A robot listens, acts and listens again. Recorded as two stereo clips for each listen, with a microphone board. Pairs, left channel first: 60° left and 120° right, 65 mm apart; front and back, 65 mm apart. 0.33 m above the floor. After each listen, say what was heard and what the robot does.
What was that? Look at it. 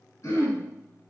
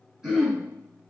The throat clearing: 100° left. Turn 100° left.
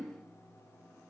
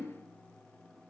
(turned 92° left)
Keep listening.
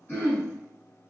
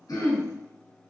Found it: throat clearing, straight ahead, 2 to 4 m away.